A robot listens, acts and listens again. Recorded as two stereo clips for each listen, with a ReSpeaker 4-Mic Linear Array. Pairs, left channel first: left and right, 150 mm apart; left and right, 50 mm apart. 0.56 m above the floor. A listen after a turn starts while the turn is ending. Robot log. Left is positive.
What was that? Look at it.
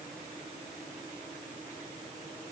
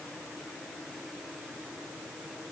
cmd idle
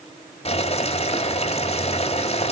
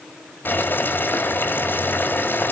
note: The boiling: about 45° left or 135° left.
cmd yaw +45
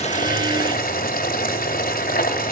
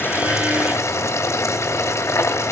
note: So it is at 90° left.
cmd yaw +90
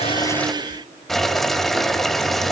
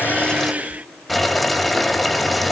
end: Found it: boiling, straight ahead.